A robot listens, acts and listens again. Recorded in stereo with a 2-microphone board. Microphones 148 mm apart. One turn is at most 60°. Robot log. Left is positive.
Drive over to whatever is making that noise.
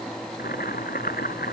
cmd yaw +60
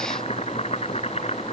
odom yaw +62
note: So it is at 40° left.
cmd yaw +40
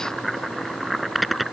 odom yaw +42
cmd fwd 1.0
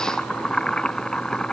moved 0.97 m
cmd fwd 1.0
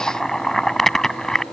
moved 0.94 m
cmd fwd 1.0
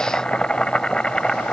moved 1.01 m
cmd fwd 1.0
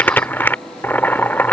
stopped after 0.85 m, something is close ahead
note: The boiling is now 10° left.
cmd yaw +10
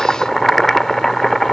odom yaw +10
end: Arrived at the boiling, straight ahead.